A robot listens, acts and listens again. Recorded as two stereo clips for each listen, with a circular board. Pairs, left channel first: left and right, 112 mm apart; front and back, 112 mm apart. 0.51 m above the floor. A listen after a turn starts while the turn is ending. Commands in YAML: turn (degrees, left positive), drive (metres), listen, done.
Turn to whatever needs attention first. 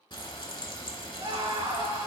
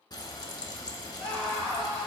turn: -80
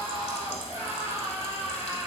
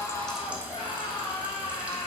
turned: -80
turn: -25
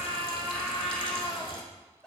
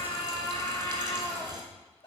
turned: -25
done: "Facing the scream, 2 to 4 m away."